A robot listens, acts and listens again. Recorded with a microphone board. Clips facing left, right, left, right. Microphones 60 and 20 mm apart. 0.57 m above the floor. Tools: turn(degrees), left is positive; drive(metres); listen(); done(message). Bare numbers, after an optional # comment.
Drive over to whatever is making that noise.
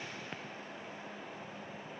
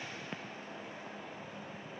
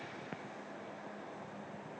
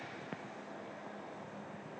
listen()
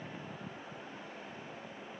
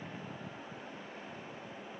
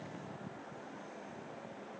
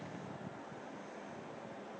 listen()
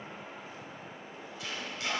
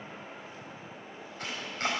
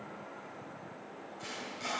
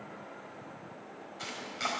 # The chopping: about 50° right or 130° right.
turn(-50)
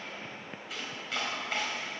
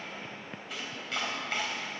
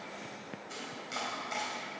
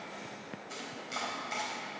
drive(1.0)
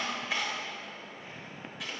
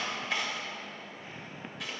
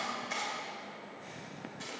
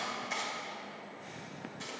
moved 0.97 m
drive(1.0)
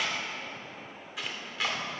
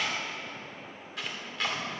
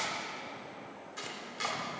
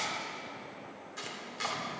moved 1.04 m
drive(1.0)
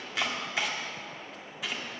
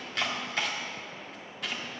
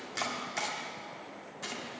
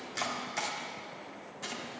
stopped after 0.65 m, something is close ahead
done("Arrived at the chopping, straight ahead.")